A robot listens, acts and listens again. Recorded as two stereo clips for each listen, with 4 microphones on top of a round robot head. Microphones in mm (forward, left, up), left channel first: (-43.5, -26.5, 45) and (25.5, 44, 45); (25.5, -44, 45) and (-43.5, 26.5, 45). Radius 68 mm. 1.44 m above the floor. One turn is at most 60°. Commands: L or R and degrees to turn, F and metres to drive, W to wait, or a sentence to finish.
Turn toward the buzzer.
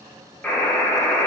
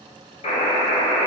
R55
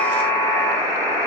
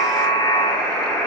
L15
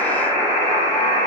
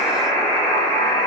Found it: a buzzer, straight ahead.